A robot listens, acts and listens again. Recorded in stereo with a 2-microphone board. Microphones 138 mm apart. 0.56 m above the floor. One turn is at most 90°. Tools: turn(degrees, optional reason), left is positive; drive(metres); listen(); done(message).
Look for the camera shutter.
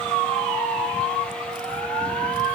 listen()
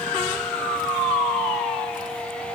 listen()
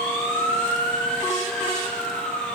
done("I can't make out a camera shutter.")